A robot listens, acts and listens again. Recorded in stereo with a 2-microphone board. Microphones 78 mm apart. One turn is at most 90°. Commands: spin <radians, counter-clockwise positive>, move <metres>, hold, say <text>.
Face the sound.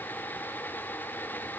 hold
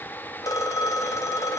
spin 0.87
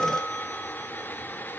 say Facing the phone ringing.